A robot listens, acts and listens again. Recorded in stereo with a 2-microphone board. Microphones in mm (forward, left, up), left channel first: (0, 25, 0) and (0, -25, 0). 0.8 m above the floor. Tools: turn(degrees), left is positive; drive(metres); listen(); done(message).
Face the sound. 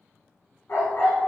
turn(degrees=45)
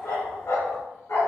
turn(degrees=85)
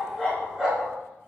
turn(degrees=10)
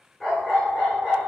done("Facing the dog barking.")